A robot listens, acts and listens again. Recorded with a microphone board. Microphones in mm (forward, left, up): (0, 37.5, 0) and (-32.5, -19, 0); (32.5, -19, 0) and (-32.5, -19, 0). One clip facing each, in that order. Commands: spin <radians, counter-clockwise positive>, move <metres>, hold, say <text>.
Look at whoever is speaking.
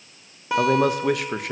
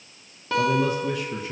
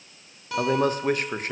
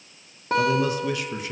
spin 0.79
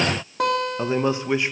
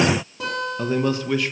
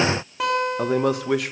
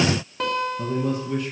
say Facing the man speaking, 1 to 2 m away.